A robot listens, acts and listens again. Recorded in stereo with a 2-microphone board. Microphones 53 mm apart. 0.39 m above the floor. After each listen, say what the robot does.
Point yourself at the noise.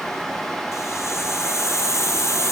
Turn 60° left.
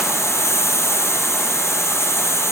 Turn 60° left.
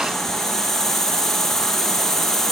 Facing the hiss.